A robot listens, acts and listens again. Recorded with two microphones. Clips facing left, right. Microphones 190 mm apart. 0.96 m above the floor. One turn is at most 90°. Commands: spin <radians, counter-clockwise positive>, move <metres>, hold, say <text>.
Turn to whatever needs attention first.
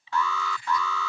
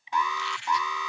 spin -0.35
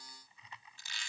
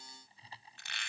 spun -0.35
hold
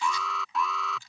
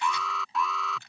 say Found it: an alarm, straight ahead.